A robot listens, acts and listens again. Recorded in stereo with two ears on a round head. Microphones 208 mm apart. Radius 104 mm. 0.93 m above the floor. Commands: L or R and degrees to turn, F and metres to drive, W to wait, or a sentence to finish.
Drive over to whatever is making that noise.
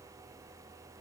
W
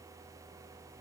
W
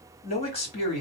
L30
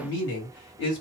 L120
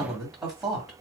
F1.0
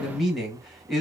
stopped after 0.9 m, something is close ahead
Arrived at the man speaking, straight ahead.